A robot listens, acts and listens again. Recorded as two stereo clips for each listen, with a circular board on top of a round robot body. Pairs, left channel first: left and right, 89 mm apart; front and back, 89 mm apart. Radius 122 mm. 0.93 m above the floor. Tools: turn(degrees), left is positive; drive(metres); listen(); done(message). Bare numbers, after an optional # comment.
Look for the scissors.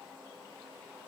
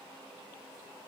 listen()
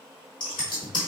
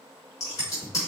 # The scissors: 50° left.
turn(50)
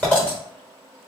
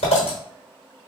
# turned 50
# The scissors is now 10° left.
turn(10)
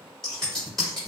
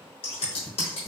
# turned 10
done("Found it: scissors, straight ahead, under 1 m away.")